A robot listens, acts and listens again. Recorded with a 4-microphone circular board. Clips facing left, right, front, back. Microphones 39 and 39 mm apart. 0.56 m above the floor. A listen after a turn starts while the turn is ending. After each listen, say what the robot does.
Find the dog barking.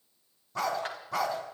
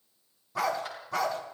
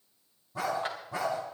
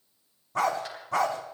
Turn 180° left.
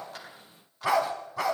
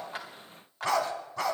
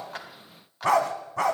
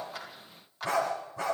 Facing the dog barking.